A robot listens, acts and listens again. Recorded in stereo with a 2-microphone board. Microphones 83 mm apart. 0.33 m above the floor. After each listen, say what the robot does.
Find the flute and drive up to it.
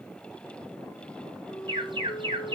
Turn 90° left.
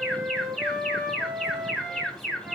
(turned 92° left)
Turn 10° right.
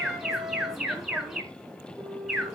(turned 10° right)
Drive 1.0 m forward.
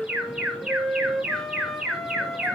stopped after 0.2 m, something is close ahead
Something is in my way. I am facing the flute but have not reached it.